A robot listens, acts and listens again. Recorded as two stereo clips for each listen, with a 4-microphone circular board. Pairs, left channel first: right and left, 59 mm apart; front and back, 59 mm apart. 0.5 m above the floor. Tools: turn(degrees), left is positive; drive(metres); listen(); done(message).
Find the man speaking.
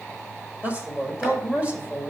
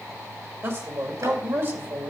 turn(degrees=150)
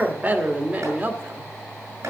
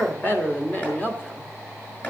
turn(degrees=40)
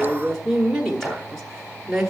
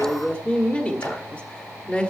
turn(degrees=10)
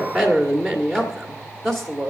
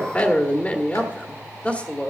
done("Found it: a man speaking, straight ahead, 1 to 2 m away.")